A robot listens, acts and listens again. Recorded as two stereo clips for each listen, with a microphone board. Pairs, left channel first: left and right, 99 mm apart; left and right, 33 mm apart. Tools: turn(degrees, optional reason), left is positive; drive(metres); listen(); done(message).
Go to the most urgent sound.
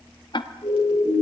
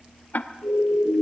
turn(degrees=40, reason="The siren: about 40° left or 140° left.")
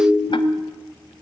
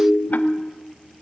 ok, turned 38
drive(metres=1.0)
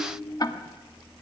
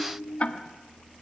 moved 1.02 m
listen()
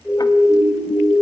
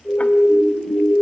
drive(metres=1.0)
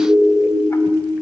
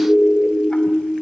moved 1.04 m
drive(metres=1.0)
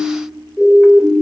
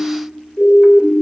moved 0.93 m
drive(metres=1.0)
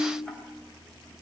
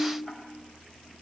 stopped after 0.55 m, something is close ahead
listen()
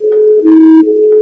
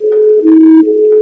done("I am next to the siren.")